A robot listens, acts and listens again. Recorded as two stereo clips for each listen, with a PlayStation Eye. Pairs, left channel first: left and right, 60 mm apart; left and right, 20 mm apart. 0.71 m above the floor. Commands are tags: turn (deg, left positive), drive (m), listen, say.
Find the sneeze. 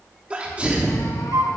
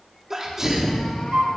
<turn deg="-20"/>
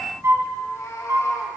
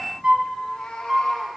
<listen/>
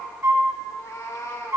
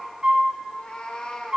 <say>I heard a sneeze, but can't make it out now. It was about straight ahead or 140° right.</say>